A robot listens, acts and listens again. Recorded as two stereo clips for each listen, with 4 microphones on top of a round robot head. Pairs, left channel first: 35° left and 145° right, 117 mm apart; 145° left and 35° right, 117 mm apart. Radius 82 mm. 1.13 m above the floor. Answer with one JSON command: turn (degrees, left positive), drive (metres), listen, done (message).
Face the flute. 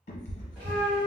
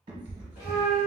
{"turn": -170}
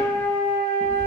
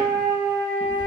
{"turn": -40}
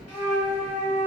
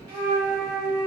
{"turn": 15}
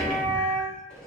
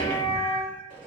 {"done": "Found it: a flute, straight ahead."}